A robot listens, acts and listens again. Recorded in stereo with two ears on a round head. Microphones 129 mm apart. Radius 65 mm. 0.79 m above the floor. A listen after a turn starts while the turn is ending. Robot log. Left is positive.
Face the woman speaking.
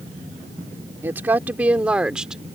cmd yaw -30
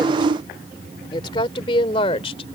note: So it is at 40° left.
cmd yaw +40
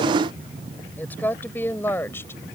note: The woman speaking is now 15° left.
cmd yaw +15
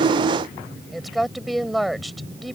end: Facing the woman speaking.